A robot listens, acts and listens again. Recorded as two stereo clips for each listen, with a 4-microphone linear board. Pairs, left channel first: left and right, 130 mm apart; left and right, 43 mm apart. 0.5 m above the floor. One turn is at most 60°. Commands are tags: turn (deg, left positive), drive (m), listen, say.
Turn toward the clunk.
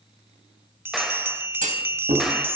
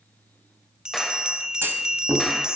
<turn deg="-60"/>
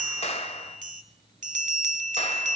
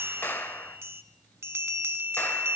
<listen/>
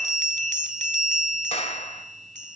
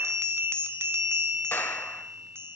<say>I heard a clunk, but can't make it out now. It was about 15° right or 45° right.</say>